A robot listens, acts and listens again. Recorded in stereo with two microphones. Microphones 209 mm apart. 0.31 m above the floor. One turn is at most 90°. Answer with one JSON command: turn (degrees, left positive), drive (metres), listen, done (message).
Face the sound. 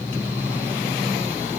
{"listen": true}
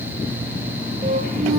{"listen": true}
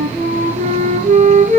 {"turn": -40}
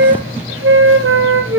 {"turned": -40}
{"turn": -90}
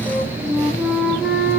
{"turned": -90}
{"done": "Facing the flute."}